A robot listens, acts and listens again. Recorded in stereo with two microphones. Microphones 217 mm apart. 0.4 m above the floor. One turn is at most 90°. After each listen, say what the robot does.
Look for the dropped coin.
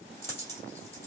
Turn 30° left.
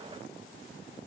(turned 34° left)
Keep listening.
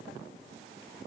I heard a dropped coin, but can't make it out now. It was about 25° right or 135° left.